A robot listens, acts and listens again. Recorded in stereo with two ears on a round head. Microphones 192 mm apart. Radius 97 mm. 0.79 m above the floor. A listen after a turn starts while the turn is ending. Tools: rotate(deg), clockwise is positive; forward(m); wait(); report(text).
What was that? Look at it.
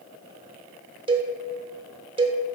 rotate(25)
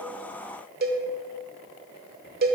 rotate(130)
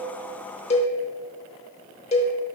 rotate(-30)
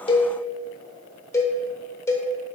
rotate(-15)
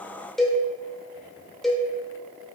report("Facing the cowbell.")